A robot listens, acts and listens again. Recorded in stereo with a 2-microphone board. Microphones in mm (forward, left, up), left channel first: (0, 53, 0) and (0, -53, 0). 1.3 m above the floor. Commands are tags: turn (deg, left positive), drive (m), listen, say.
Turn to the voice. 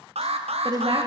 <turn deg="-50"/>
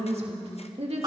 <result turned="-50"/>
<turn deg="-75"/>
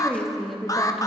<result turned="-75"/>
<say>Found it: a woman speaking, straight ahead, 2 to 4 m away.</say>